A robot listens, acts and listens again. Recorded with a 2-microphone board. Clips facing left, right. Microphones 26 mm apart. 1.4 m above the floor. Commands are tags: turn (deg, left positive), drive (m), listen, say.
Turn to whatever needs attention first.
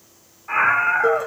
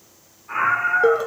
<turn deg="55"/>
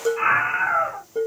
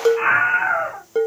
<say>Found it: a scream, straight ahead, 2 to 4 m away.</say>